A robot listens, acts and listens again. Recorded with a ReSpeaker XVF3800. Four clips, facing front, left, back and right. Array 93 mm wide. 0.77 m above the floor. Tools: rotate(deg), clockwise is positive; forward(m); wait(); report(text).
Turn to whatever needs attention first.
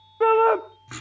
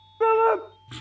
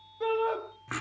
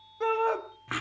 rotate(-35)
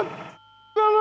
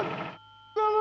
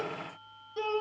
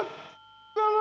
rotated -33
report("Found it: a shout, straight ahead, 1 to 2 m away.")